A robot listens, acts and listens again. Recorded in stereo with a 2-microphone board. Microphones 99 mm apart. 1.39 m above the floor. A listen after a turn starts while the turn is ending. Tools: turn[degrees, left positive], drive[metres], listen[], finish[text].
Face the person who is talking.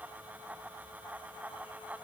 Action: listen[]
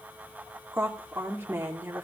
Thought: The woman speaking: about 25° right or 155° right.
Action: turn[-25]
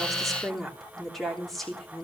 Action: finish[Found it: a woman speaking, straight ahead.]